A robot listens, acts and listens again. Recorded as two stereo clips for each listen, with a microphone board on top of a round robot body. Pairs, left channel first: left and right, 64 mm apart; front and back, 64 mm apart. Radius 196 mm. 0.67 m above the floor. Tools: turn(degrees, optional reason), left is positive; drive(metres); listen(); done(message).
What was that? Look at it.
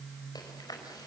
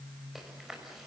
turn(degrees=95, reason="The chewing: 95° left.")
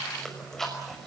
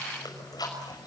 done("Found it: chewing, straight ahead.")